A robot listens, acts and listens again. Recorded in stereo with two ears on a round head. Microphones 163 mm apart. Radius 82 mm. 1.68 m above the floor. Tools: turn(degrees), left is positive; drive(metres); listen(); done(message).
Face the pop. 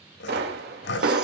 turn(degrees=-65)
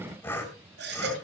listen()
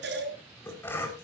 done("I heard a pop, but can't make it out now. It was about straight ahead or 50° right.")